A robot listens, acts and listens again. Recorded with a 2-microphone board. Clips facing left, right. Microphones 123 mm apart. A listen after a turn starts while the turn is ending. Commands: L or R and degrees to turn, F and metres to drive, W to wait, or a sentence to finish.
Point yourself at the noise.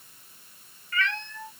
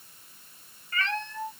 R35
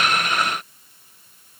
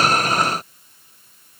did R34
W
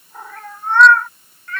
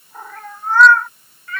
Facing the cat meowing.